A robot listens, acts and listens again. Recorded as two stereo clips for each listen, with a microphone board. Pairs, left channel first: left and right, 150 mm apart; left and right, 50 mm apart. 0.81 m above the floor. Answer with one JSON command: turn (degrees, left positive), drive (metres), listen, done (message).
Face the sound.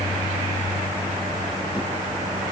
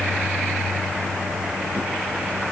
{"listen": true}
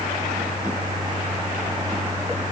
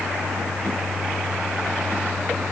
{"listen": true}
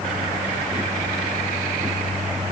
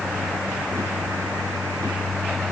{"done": "I can't make out anything."}